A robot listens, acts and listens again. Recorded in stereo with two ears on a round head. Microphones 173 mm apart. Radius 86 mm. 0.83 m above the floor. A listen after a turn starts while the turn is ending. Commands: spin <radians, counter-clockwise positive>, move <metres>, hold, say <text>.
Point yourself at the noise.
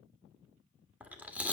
spin -0.52
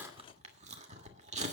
spin -2.44
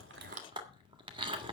spin -0.52
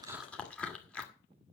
say Facing the chewing.